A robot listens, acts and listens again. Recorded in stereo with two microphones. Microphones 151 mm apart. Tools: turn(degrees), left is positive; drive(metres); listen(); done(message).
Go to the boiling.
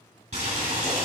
turn(degrees=-60)
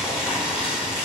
drive(metres=1.0)
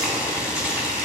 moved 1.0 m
turn(degrees=-10)
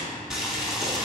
drive(metres=1.0)
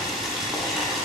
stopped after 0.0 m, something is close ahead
done("I am next to the boiling.")